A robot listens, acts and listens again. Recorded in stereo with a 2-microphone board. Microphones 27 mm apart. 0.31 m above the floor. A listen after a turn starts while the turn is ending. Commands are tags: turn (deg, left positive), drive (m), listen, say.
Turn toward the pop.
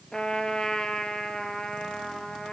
<listen/>
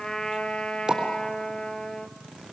<turn deg="-20"/>
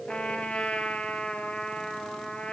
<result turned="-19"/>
<listen/>
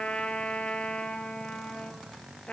<say>I heard a pop, but can't make it out now. It was about straight ahead or 140° right.</say>